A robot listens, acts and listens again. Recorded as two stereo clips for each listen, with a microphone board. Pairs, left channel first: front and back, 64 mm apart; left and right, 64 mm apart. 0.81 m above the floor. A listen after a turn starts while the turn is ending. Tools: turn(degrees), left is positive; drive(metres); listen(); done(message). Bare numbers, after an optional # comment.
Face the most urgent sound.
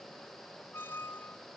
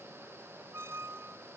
listen()
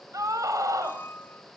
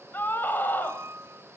# The scream: 150° left.
turn(150)
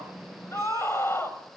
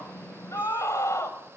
# The scream is now 50° left.
turn(50)
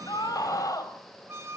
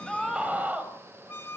# The scream is now 25° right.
turn(-25)
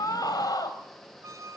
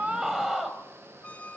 done("Found it: a scream, straight ahead.")